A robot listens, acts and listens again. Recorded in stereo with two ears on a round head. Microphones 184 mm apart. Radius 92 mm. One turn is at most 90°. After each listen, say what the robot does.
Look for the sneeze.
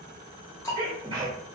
Turn 25° right.
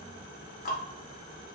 Keep listening.
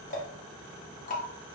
I heard a sneeze, but can't make it out now. It was about straight ahead or 130° right.